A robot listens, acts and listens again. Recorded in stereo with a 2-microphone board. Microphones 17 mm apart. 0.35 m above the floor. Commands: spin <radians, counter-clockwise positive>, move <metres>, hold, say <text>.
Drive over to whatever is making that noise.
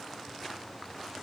hold
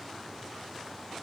hold
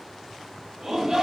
spin -0.44
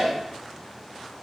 move 1.0
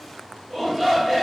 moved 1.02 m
move 1.0
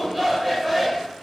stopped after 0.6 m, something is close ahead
spin -0.17
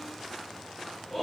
say Arrived at the shout, straight ahead.